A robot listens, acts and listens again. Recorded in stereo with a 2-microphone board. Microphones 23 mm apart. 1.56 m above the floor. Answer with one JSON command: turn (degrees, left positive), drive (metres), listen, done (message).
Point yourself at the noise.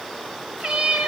{"turn": -50}
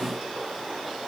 {"listen": true}
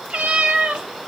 {"turn": -70}
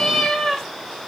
{"turn": 25}
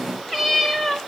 {"turn": 10}
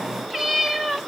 {"done": "Facing the cat meowing, 1 to 2 m away."}